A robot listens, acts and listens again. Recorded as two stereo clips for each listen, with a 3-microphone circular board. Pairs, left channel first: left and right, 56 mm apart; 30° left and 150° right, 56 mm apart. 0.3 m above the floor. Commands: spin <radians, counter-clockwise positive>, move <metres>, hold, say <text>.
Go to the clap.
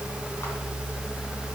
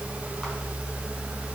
hold
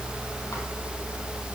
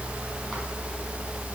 hold
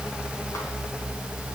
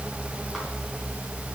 say I can't make out a clap.